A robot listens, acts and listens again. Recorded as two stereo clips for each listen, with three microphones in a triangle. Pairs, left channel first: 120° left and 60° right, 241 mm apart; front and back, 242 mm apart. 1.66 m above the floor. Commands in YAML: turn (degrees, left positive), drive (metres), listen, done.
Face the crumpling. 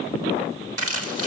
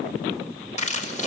turn: -60
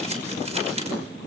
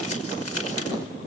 listen: true
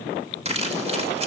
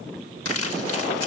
done: "Found it: crumpling, straight ahead, over 4 m away."